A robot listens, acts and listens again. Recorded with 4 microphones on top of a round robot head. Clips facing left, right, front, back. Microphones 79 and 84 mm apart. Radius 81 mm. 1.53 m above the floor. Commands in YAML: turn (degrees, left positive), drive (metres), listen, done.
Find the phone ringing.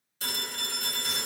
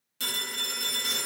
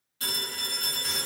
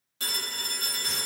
turn: -110
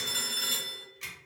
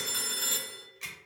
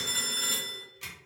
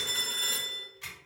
turn: -40
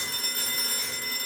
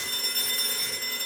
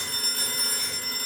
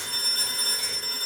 turn: 10
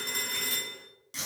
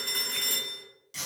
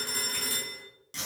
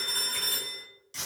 done: "Facing the phone ringing."